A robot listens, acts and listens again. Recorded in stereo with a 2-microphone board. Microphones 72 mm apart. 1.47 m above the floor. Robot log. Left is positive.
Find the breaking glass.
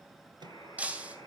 note: The breaking glass: about 20° right or 160° right.
cmd yaw -20
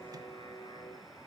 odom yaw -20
cmd idle
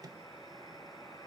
end: I heard breaking glass, but can't make it out now. It was about straight ahead or 140° right.